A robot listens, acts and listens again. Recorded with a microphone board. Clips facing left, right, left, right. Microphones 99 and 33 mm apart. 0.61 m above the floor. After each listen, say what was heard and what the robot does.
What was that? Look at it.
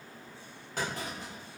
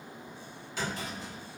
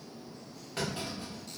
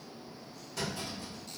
The clunk: about 50° left or 130° left. Turn 50° left.
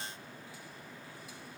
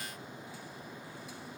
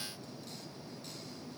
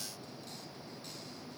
Keep listening.
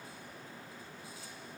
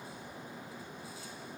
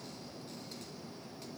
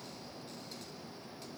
I heard a clunk, but can't make it out now. It was about straight ahead or 80° left.